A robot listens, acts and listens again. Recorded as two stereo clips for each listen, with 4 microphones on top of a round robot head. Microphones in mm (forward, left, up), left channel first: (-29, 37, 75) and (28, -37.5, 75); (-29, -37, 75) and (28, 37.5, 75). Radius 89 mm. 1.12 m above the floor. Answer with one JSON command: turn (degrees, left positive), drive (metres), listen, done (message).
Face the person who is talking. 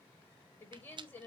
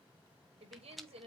{"turn": 60}
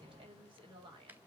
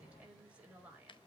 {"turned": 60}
{"turn": -20}
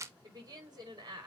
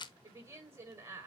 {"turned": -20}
{"done": "Facing the woman speaking, over 4 m away."}